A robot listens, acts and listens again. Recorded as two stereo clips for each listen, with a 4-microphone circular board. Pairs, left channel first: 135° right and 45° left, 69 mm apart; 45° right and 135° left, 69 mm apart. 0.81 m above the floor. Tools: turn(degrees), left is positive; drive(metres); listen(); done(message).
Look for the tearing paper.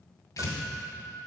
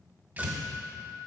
turn(degrees=-165)
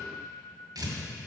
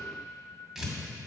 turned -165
turn(degrees=50)
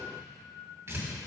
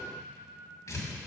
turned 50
done("Facing the tearing paper, 2 to 4 m away.")